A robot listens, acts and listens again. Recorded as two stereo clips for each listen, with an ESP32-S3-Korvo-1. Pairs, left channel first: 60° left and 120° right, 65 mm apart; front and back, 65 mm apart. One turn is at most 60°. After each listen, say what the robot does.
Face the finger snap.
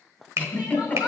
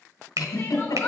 Turn 60° right.
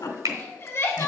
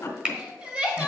Turn 60° right.
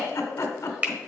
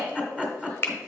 Turn 55° right.
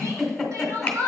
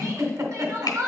Keep listening.
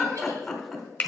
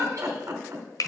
Found it: a finger snap, straight ahead.